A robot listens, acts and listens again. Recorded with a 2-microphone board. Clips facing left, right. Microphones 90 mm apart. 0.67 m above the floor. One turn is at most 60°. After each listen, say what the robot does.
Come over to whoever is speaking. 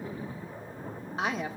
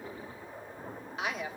Turn 35° left.
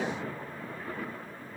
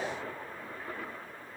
Keep listening.
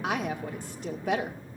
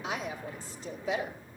Turn 60° left.
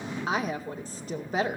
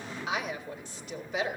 Turn 45° left.
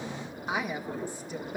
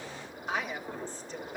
Turn 15° left.
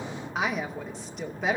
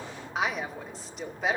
Drive 1.0 m forward.
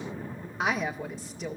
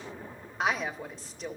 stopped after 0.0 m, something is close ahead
Something is in my way. I am facing the woman speaking but have not reached it.